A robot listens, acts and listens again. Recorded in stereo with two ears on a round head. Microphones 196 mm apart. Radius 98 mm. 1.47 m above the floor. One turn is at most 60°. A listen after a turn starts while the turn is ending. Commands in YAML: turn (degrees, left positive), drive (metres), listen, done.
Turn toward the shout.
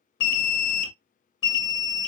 listen: true
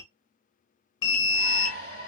turn: -45
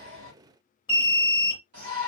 turn: -60
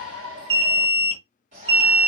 turn: -35
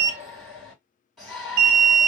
done: "Facing the shout, 2 to 4 m away."